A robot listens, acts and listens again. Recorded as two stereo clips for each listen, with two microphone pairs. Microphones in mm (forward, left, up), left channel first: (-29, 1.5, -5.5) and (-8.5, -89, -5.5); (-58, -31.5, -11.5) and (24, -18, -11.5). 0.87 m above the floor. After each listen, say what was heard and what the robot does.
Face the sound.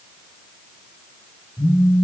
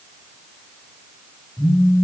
The phone buzzing: straight behind. Turn 180° left.
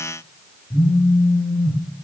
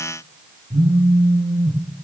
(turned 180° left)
The phone buzzing is now 50° left. Turn 50° left.
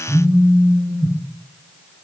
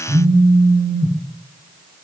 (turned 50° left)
Found it: a phone buzzing, straight ahead.